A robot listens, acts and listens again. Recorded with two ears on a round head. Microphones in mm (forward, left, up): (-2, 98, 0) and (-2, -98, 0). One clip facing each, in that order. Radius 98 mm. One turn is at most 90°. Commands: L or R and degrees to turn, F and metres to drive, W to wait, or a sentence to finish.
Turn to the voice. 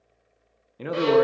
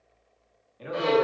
L65
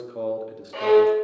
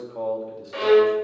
L25
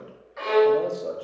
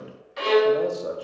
Facing the man speaking, under 1 m away.